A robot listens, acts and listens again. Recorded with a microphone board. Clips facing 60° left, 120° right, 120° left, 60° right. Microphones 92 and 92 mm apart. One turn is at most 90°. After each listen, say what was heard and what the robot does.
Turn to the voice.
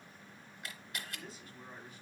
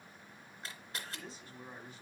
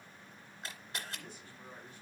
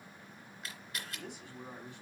The man speaking: 65° right. Turn 65° right.
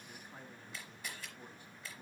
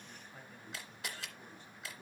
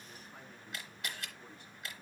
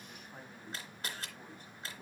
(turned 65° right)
The man speaking is now 20° right. Turn 20° right.
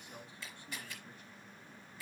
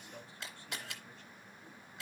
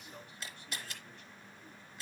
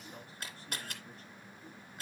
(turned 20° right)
The man speaking is now 10° right. Turn 10° right.
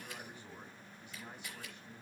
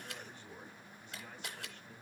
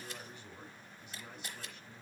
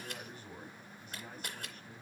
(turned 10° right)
The man speaking is now 15° right. Turn 15° right.
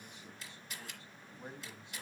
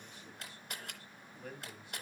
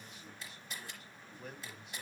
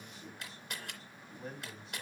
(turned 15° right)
Found it: a man speaking, straight ahead, 2 to 4 m away.